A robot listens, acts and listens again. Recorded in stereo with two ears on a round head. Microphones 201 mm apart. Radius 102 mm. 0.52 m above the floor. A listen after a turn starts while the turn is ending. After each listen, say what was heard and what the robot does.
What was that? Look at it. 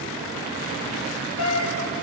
The cat meowing: about 70° left or 110° left. Turn 70° left.
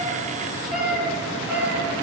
So it is at 10° right. Turn 10° right.
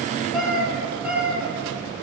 Found it: a cat meowing, straight ahead, over 4 m away.